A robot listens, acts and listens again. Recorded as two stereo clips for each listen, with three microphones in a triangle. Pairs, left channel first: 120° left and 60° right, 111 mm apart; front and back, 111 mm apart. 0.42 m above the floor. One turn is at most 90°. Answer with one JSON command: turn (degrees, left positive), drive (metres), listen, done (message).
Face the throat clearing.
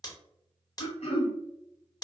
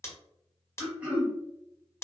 {"turn": 90}
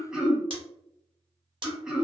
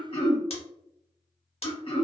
{"turn": 20}
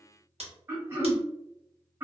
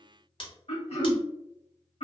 {"done": "Found it: throat clearing, straight ahead, under 1 m away."}